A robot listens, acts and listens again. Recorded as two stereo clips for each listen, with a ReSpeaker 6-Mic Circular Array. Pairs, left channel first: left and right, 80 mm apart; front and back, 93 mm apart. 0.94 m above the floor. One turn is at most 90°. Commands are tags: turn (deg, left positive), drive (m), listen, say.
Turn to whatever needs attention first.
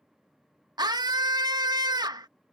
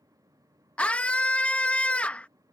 <turn deg="-75"/>
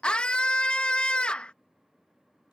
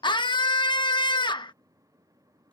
<turn deg="15"/>
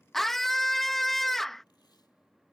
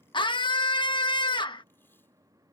<say>Facing the scream.</say>